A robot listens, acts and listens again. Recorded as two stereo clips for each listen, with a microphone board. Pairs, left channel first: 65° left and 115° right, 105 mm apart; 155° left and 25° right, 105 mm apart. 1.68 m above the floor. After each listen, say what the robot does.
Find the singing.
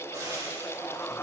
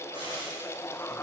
Keep listening.
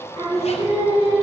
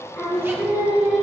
Turn 95° right.
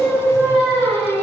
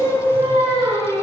Turn 20° right.
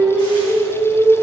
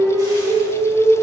Turn 10° right.
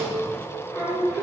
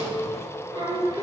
Facing the singing.